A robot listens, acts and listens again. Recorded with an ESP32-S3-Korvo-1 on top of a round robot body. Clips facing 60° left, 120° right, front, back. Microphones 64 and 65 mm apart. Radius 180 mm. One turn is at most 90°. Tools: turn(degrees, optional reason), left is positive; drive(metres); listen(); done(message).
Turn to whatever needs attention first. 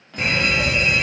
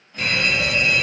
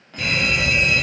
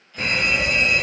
turn(degrees=90, reason="The alarm: 125° left.")
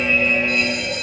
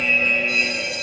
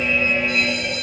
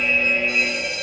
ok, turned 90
turn(degrees=30, reason="The alarm is now 30° left.")
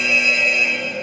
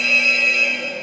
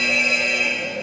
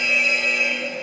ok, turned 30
done("Found it: an alarm, straight ahead, 1 to 2 m away.")